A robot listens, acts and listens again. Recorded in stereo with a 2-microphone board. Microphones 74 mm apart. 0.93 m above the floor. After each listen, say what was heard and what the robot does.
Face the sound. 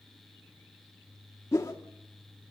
The whoosh: about 40° left or 140° left. Turn 40° left.
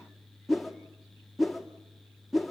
Found it: a whoosh, straight ahead, 2 to 4 m away.